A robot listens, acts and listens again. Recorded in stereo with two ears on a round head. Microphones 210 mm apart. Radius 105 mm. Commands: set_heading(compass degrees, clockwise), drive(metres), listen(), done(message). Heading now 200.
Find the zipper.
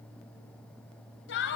listen()
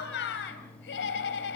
listen()
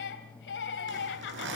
set_heading(255)
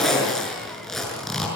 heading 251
done("Found it: a zipper, straight ahead, over 4 m away.")